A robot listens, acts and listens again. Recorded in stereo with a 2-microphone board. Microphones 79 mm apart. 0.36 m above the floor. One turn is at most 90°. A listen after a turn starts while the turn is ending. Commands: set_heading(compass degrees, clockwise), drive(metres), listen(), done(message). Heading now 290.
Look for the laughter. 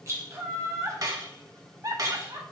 set_heading(340)
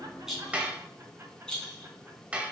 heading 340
listen()
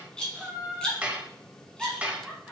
set_heading(350)
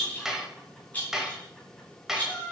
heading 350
done("Facing the laughter, 2 to 4 m away.")